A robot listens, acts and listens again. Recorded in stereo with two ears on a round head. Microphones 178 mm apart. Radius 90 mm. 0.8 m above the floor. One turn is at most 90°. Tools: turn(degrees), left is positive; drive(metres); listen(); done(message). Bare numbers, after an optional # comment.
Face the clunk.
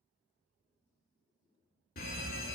listen()
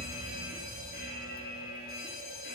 listen()
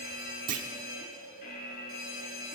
# The clunk: about 45° right or 135° right.
turn(-45)
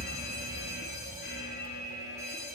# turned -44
listen()
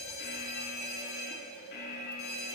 done("I heard a clunk, but can't make it out now. It was about straight ahead or 95° right.")